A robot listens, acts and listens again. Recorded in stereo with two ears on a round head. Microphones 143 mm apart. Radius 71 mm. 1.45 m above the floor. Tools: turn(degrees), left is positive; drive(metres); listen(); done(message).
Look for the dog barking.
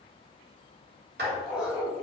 turn(degrees=-30)
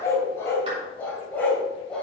done("Found it: a dog barking, straight ahead.")